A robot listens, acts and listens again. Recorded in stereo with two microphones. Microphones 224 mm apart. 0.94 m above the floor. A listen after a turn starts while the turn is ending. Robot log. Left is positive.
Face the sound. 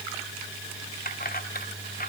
note: The keys jangling: about 40° left or 140° left.
cmd yaw +40
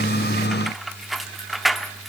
end: Found it: keys jangling, straight ahead, 1 to 2 m away.